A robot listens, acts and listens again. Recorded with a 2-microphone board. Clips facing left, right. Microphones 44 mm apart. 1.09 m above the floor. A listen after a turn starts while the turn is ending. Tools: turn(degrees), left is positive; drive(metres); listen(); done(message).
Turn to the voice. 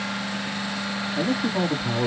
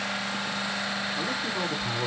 turn(degrees=75)
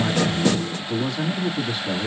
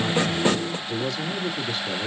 turn(degrees=20)
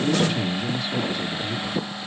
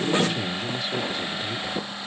done("Facing the man speaking, 2 to 4 m away.")